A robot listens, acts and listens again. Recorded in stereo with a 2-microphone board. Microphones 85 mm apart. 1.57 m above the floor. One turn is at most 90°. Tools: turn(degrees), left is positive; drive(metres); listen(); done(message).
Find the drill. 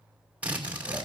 turn(degrees=-30)
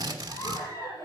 turn(degrees=-90)
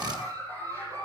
turn(degrees=-45)
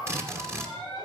turn(degrees=-35)
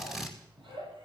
done("Found it: a drill, straight ahead, 2 to 4 m away.")